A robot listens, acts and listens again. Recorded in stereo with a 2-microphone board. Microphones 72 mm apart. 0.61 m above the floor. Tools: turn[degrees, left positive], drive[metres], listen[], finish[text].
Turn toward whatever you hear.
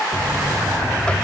Action: turn[30]
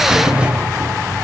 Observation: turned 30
Thought: So it is at 15° right.
Action: turn[-15]
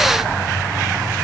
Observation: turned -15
Action: finish[Found it: a buzzer, straight ahead, under 1 m away.]